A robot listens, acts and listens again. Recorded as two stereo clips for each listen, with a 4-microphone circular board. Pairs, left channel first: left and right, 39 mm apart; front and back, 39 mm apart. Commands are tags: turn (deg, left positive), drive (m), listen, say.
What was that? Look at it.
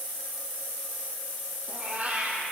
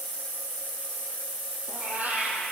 <turn deg="-135"/>
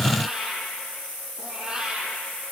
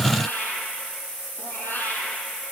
<turn deg="-20"/>
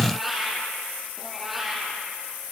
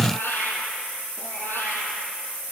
<say>Facing the cat meowing.</say>